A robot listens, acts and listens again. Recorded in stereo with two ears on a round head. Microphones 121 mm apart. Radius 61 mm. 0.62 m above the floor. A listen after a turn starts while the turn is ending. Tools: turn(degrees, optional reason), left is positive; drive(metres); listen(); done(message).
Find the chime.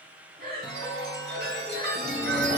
turn(degrees=-90)
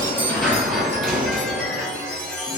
done("Facing the chime.")